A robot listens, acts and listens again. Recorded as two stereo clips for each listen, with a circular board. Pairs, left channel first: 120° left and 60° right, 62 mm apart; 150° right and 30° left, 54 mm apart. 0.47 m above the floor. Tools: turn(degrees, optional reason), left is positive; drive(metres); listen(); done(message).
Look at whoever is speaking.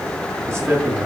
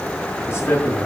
turn(degrees=-110, reason="The man speaking: 110° right.")
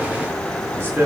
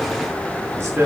done("Facing the man speaking.")